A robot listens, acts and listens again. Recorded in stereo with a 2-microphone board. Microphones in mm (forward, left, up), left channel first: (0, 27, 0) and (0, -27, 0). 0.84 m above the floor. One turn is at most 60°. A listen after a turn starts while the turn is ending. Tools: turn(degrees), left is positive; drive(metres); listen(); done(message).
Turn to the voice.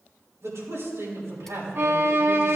turn(degrees=-60)
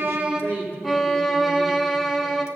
turn(degrees=-45)
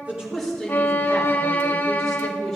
done("Facing the man speaking, 2 to 4 m away.")